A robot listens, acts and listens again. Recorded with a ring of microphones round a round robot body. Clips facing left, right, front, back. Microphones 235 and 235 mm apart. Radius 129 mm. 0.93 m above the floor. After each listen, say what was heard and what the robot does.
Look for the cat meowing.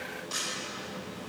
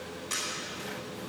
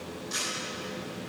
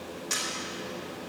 Keep listening.
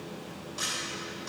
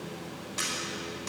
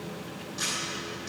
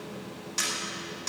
Keep listening.
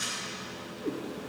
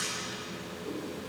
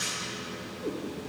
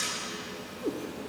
The cat meowing: 120° left. Turn 120° left.
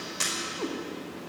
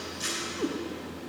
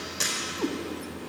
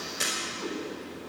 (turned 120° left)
The cat meowing is now 25° right. Turn 25° right.
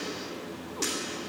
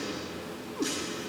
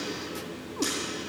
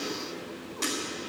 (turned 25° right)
Keep listening.
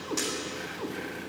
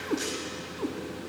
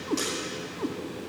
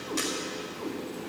The cat meowing is now 40° right. Turn 40° right.
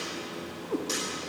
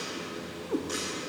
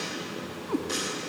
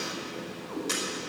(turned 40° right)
Facing the cat meowing, 1 to 2 m away.